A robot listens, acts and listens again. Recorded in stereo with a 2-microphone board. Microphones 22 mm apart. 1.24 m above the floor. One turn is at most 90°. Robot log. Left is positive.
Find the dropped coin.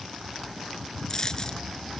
note: The dropped coin: about 30° left or 150° left.
cmd yaw +30
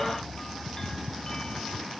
cmd idle
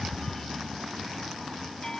end: I heard a dropped coin, but can't make it out now. It was about straight ahead or 120° left.